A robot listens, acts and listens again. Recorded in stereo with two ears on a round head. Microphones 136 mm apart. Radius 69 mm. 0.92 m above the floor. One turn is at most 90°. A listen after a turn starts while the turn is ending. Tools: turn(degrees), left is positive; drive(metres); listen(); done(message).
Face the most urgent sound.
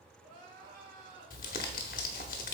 turn(degrees=-60)
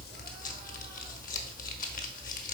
listen()
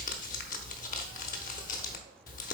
listen()
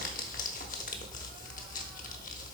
done("I heard crying, but can't make it out now. It was about straight ahead or 60° right.")